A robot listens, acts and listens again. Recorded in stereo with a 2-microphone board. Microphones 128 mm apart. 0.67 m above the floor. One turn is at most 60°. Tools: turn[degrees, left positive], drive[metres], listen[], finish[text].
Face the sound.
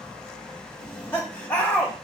Action: turn[30]
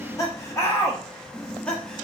Action: turn[30]
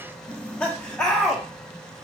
Action: turn[30]
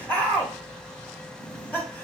Action: turn[30]
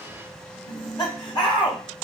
Thought: So it is at 145° left.
Action: turn[60]
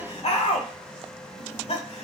Thought: The laughter is now 55° left.
Action: turn[55]
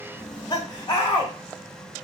Thought: The laughter is now 30° left.
Action: turn[30]
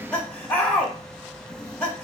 Thought: The laughter is now 10° left.
Action: turn[10]
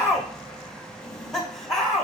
Action: finish[Found it: laughter, straight ahead, 1 to 2 m away.]